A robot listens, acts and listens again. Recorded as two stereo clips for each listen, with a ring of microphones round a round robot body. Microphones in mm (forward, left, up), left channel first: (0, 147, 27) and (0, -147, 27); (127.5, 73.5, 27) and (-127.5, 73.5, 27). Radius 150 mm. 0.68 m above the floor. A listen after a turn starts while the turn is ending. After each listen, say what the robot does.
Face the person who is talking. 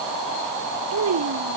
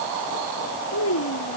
Turn 45° right.
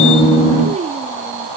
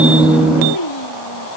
Turn 20° right.
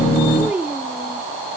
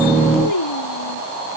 Facing the child speaking.